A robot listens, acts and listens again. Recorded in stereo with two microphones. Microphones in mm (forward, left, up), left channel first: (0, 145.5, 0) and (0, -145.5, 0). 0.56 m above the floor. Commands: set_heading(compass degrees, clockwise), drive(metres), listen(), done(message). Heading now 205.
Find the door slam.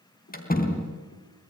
set_heading(175)
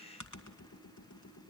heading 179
listen()
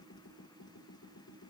done("I heard a door slam, but can't make it out now. It was about 5° left or 125° left.")